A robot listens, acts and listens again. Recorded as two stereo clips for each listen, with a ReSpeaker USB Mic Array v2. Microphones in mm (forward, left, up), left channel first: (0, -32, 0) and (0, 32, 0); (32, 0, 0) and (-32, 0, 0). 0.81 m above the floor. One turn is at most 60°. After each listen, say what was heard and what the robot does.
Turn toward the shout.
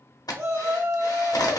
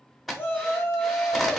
The shout: 55° left. Turn 55° left.
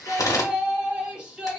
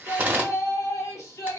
The shout is now 20° left. Turn 20° left.
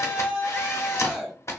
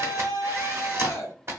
The shout is now 10° left. Turn 10° left.
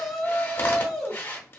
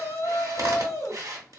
Facing the shout.